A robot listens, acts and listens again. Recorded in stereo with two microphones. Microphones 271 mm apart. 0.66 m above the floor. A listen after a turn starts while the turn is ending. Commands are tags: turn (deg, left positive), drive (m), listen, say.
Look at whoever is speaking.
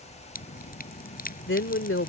<turn deg="45"/>
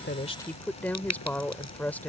<say>Facing the woman speaking.</say>